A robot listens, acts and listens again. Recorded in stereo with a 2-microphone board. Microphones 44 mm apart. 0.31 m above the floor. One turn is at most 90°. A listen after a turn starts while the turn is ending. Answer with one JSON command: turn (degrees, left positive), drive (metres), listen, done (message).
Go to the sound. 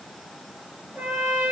{"turn": -50}
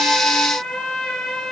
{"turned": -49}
{"drive": 1.0}
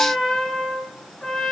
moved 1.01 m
{"drive": 1.0}
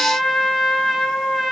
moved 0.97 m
{"turn": -10}
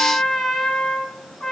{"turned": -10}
{"drive": 1.0}
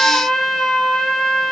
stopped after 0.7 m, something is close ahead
{"turn": 10}
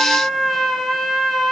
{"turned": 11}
{"done": "I am next to the trumpet."}